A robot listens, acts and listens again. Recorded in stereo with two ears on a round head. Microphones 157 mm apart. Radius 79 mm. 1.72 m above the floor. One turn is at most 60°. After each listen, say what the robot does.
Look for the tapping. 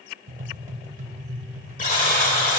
Turn 45° right.
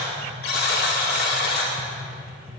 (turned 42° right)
Facing the tapping.